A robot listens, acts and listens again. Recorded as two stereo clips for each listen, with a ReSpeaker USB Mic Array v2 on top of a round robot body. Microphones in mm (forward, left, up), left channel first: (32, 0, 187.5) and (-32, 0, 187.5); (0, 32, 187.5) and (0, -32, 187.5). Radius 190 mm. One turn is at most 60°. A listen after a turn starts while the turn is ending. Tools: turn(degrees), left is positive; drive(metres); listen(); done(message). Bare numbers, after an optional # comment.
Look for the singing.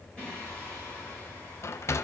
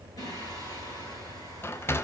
# The singing: 75° left.
turn(60)
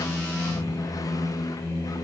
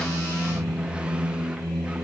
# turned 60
# The singing is now 15° left.
turn(15)
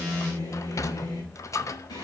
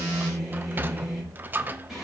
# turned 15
done("Found it: singing, straight ahead, over 4 m away.")